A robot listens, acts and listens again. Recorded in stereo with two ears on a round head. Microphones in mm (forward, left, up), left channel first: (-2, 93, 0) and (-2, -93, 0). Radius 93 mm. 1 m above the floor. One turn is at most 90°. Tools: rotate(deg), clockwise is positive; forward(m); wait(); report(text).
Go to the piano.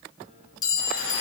wait()
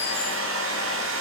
wait()
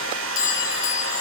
report("I can't make out a piano to turn to.")